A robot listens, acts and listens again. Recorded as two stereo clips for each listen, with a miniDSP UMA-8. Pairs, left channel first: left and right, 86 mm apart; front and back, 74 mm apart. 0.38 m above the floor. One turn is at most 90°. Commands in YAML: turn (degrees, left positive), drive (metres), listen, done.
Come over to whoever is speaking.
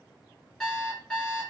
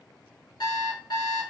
listen: true
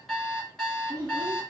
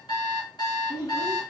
turn: -40
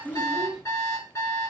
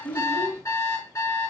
drive: 1.0
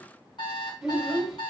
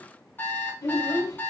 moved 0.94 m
turn: -10
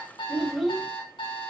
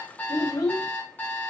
drive: 1.0
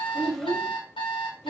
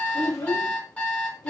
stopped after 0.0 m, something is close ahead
done: "I am next to the child speaking."